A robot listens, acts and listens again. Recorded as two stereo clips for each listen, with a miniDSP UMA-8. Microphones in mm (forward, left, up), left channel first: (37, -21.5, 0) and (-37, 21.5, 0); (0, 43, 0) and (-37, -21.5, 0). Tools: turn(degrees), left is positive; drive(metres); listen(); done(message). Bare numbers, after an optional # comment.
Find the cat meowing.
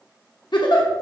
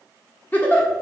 listen()
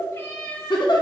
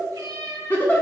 # The cat meowing: 90° right.
turn(-90)
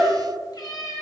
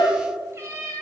# The cat meowing is now 80° right.
turn(-80)
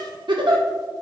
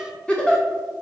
listen()
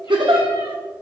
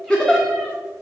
listen()
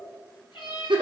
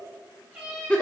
# The cat meowing is now 50° right.
turn(-50)
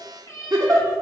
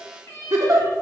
# The cat meowing is now 10° left.
turn(10)
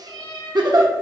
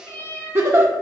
done("Found it: a cat meowing, straight ahead.")